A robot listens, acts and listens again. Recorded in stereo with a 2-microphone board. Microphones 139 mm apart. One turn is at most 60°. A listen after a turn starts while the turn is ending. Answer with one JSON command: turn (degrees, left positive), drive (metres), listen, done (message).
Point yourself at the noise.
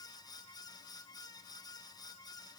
{"listen": true}
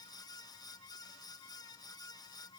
{"listen": true}
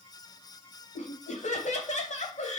{"turn": 55}
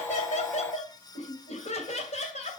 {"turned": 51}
{"turn": 55}
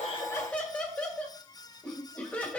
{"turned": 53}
{"turn": 10}
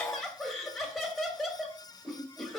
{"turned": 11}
{"done": "Found it: laughter, straight ahead, 2 to 4 m away."}